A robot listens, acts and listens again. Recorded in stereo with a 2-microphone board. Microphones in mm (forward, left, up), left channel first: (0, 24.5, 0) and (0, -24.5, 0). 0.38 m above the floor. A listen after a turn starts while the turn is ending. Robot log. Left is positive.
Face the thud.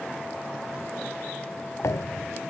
cmd yaw +90
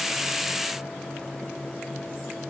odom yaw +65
note: Nothing new. It was at 25° left.
cmd yaw +25
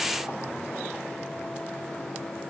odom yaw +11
note: Nothing new. It was at 15° left.
cmd yaw +15
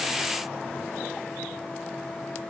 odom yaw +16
end: Facing where the thud came from. I can't hear it now.